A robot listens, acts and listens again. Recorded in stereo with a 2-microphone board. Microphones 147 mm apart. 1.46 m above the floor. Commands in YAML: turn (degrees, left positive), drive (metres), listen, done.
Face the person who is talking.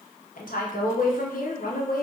turn: 75
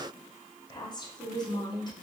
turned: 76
turn: 30
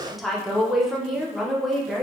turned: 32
done: "Facing the woman speaking."